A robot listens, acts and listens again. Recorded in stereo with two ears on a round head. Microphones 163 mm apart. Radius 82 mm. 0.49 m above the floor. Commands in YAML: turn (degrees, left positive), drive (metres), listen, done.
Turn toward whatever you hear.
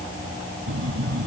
turn: -75
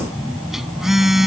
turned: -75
done: "Found it: a phone buzzing, straight ahead."